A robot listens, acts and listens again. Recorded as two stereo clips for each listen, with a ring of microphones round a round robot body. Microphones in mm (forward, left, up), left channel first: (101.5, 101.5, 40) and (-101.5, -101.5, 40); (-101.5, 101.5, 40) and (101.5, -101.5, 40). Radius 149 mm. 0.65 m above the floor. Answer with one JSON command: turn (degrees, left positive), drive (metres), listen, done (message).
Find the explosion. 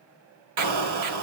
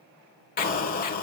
{"turn": -165}
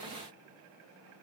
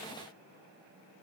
{"done": "Facing where the explosion came from. I can't hear it now."}